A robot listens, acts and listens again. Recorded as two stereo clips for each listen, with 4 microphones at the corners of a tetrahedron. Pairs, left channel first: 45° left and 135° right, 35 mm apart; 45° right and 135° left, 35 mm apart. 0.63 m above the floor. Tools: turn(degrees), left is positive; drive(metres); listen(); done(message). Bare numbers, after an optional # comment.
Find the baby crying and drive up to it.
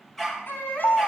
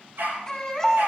# The baby crying: 30° left.
turn(30)
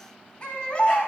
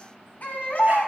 drive(1.0)
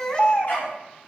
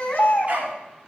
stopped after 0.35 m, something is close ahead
# The baby crying is now 10° right.
turn(-10)
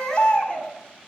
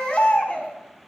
done("Something is in my way. I am facing the baby crying but have not reached it.")